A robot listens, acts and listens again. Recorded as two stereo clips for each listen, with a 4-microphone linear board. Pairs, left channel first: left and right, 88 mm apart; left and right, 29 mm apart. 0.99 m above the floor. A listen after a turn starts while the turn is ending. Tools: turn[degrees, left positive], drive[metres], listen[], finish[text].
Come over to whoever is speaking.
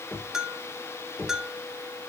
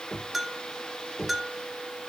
Action: listen[]
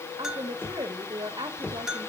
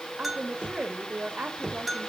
Thought: The woman speaking: about 55° right or 125° right.
Action: turn[-55]
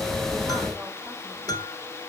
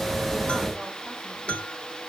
Action: listen[]
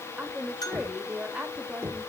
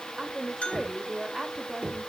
Thought: So it is at 10° right.
Action: turn[-10]
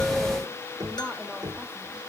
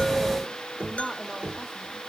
Action: listen[]
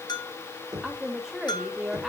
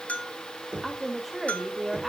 Action: drive[1.0]
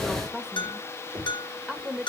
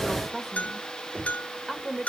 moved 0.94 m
Action: drive[1.0]
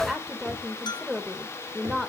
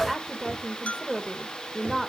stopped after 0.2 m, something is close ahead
Action: finish[I am next to the woman speaking.]